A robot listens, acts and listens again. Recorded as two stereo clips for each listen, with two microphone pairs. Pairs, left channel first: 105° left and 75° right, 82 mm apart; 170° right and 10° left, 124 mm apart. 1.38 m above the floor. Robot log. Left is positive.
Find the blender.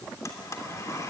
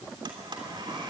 note: The blender: 60° left.
cmd yaw +60
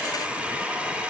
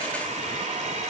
end: Facing the blender.